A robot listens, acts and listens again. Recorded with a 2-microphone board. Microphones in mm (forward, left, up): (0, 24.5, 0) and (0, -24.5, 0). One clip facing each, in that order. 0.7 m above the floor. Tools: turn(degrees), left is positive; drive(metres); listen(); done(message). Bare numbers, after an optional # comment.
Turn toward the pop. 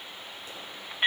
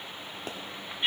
# The pop: about 65° right or 115° right.
turn(-65)
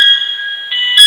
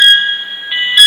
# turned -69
listen()
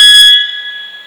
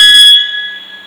done("I heard a pop, but can't make it out now. It was about 5° left or 50° right.")